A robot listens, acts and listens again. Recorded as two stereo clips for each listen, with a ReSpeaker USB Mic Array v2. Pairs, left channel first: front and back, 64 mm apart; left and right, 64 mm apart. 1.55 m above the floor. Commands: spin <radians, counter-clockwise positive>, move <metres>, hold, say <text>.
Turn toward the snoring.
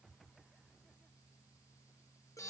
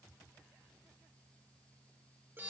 hold
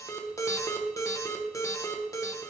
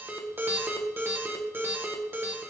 hold
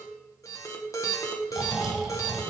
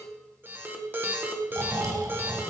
spin -1.75
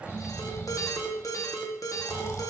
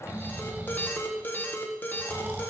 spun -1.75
spin -0.61
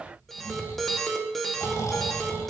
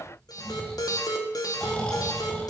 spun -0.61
spin 0.35
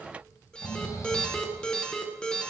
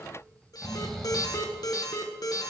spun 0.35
say Found it: snoring, straight ahead, 2 to 4 m away.